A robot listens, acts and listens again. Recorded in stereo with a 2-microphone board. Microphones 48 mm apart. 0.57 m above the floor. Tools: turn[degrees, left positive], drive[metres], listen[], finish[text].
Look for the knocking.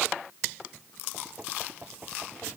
Thought: The knocking: about 30° right or 150° right.
Action: turn[-30]
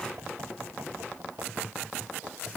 Thought: So it is at 120° right.
Action: turn[-120]
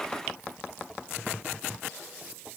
Action: finish[Found it: knocking, straight ahead.]